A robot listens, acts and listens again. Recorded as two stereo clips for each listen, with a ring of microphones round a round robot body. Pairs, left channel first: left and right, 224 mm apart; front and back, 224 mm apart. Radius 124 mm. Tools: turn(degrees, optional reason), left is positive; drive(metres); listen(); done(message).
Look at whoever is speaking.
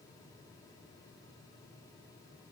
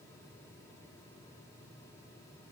listen()
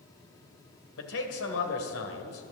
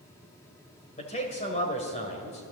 turn(degrees=65, reason="The man speaking: 65° left.")
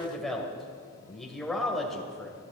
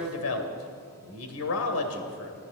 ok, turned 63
done("Found it: a man speaking, straight ahead.")